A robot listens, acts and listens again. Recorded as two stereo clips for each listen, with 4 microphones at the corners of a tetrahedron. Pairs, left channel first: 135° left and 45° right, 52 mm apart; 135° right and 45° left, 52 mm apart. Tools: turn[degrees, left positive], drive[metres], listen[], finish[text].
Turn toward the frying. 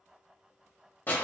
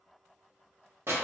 Action: listen[]
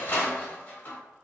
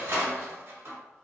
Action: listen[]
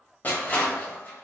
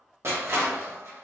Action: finish[I can't make out frying to turn to.]